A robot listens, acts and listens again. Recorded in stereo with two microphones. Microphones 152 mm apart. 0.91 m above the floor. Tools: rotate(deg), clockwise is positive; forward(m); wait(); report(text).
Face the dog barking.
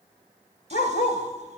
rotate(-90)
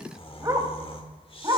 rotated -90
rotate(25)
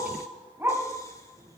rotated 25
rotate(15)
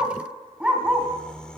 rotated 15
report("Facing the dog barking.")